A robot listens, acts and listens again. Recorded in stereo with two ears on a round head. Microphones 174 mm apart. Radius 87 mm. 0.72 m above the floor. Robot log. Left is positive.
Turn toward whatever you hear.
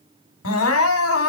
cmd yaw +90
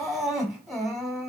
end: Facing the crying, 1 to 2 m away.